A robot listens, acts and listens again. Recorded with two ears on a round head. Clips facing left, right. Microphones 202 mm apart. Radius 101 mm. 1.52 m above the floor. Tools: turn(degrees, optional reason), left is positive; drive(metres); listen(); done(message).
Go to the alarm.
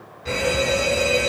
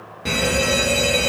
turn(degrees=-70, reason="The alarm: about 70° right or 110° right.")
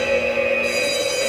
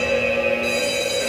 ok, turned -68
drive(metres=1.0)
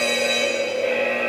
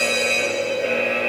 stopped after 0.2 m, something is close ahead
turn(degrees=-15, reason="The alarm is now 15° right.")
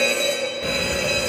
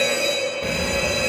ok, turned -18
done("Blocked. The alarm is further on, straight ahead.")